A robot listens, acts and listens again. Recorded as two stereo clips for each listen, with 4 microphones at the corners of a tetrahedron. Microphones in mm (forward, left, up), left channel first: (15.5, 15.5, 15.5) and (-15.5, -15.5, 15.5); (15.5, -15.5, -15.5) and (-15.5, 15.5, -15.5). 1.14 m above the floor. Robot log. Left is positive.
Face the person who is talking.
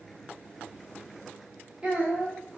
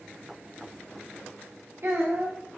note: The child speaking: 160° left.
cmd yaw +160
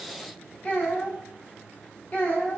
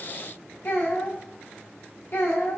note: The child speaking is now 10° right.
cmd yaw -10
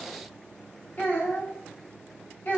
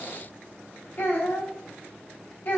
end: Found it: a child speaking, straight ahead.